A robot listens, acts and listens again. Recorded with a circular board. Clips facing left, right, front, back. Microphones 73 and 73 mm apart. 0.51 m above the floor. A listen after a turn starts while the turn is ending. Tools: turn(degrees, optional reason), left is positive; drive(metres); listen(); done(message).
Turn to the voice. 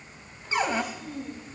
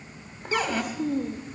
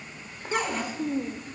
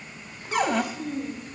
turn(degrees=-55, reason="The child speaking: 55° right.")
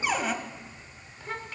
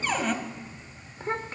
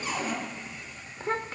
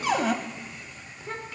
turn(degrees=-35, reason="The child speaking is now 35° right.")
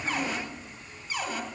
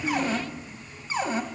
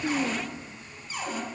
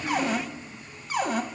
listen()
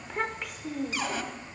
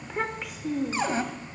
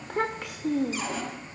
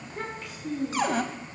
done("Found it: a child speaking, straight ahead.")